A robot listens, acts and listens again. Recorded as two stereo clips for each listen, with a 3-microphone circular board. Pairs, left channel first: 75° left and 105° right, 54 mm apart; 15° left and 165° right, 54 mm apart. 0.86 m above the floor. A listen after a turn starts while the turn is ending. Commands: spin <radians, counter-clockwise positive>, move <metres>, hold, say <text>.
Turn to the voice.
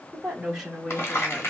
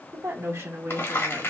spin 2.97
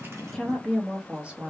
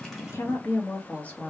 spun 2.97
spin -0.79
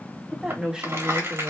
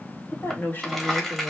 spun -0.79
spin -0.70
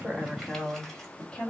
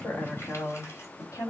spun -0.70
say Found it: a woman speaking, straight ahead.